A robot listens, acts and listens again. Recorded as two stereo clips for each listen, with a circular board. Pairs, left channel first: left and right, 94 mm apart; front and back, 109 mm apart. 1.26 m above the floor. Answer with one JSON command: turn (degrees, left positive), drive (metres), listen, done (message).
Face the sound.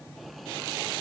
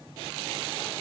{"listen": true}
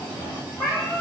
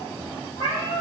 {"turn": 20}
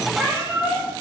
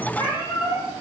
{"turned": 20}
{"turn": -20}
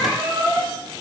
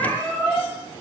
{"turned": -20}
{"turn": -25}
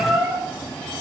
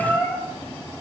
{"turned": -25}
{"turn": -30}
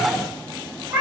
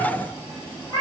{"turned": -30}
{"turn": -30}
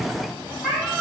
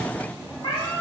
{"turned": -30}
{"done": "Found it: a cat meowing, straight ahead, 1 to 2 m away."}